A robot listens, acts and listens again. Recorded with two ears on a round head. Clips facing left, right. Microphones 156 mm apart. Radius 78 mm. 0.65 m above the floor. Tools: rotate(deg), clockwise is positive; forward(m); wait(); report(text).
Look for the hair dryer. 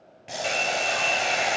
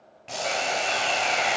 rotate(-35)
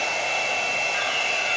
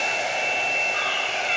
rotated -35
rotate(-110)
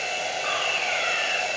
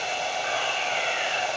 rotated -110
rotate(-25)
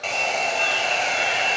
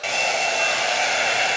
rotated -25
report("Facing the hair dryer, 2 to 4 m away.")